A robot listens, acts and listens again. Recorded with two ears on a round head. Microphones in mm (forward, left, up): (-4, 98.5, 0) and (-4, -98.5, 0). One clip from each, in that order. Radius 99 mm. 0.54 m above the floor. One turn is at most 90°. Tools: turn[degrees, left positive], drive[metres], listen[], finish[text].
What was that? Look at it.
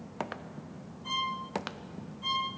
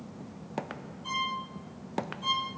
Action: turn[-30]
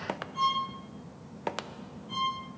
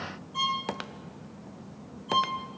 Thought: So it is at 130° right.
Action: turn[-90]
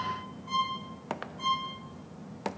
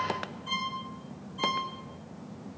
Thought: The violin is now 70° right.
Action: turn[-70]
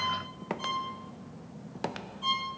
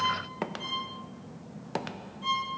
Thought: The violin is now 25° left.
Action: turn[25]
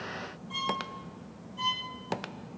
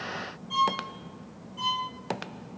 Thought: The violin is now 10° right.
Action: turn[-10]
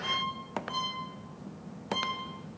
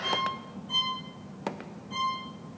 Action: finish[Found it: a violin, straight ahead, over 4 m away.]